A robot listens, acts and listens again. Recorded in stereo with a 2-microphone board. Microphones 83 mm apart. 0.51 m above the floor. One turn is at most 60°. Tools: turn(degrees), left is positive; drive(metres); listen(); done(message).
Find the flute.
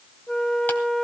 turn(degrees=30)
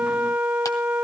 turn(degrees=-20)
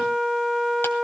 done("Facing the flute.")